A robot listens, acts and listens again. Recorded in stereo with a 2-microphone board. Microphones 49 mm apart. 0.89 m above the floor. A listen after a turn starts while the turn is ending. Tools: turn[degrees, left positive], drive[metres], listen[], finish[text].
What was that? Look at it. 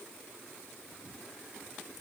Action: listen[]
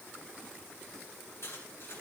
Thought: The cutlery clinking: about 55° left or 125° left.
Action: turn[55]
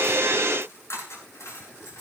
Thought: So it is at 70° left.
Action: turn[70]
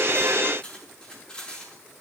Thought: The cutlery clinking is now 15° left.
Action: turn[15]
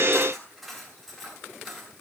Action: finish[Facing the cutlery clinking.]